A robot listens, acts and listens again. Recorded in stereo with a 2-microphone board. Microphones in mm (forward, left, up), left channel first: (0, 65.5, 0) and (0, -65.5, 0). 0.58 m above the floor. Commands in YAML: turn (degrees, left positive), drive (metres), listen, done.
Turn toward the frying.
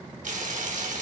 turn: -90
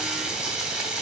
done: "Facing the frying."